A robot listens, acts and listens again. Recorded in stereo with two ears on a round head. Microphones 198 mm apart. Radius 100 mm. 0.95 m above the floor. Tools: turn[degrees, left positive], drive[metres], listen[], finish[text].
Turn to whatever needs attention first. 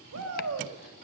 Thought: The shout: about 70° right or 110° right.
Action: turn[-70]
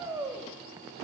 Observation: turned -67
Thought: So it is at 15° right.
Action: turn[-15]
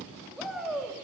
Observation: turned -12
Action: finish[Facing the shout, 2 to 4 m away.]